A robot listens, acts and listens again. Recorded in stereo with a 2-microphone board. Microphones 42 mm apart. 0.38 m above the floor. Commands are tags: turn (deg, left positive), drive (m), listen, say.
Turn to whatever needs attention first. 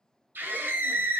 <turn deg="-55"/>
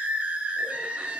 <turn deg="-35"/>
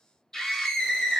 <turn deg="15"/>
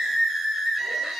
<say>Found it: a scream, straight ahead, 1 to 2 m away.</say>